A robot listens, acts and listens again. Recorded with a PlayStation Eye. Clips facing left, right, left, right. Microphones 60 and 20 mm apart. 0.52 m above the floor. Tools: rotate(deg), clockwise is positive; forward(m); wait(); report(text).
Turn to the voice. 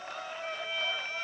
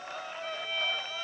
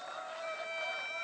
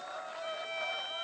wait()
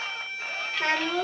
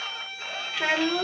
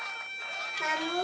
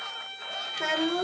rotate(30)
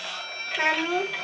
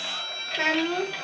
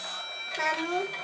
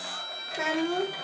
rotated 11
report("Facing the child speaking, under 1 m away.")